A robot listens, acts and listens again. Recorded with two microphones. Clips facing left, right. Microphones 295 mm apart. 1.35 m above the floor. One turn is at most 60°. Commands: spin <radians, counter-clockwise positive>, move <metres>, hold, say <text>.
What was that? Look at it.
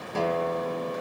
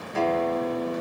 spin 0.87
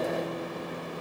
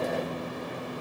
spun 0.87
hold
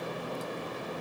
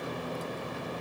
hold
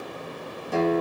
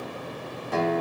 say Facing the guitar.